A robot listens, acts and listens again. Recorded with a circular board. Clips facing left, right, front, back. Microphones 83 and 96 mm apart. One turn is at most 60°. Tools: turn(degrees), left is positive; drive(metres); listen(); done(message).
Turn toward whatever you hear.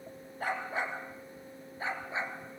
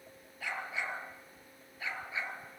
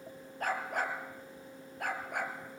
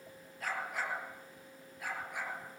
turn(degrees=30)
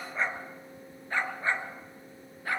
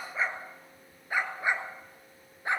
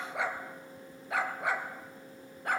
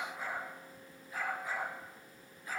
turn(degrees=-25)
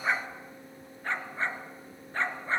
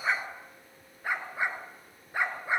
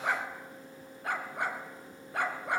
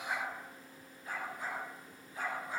turn(degrees=-10)
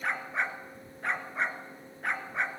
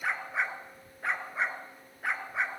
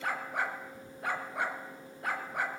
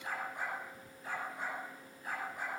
done("Facing the dog barking.")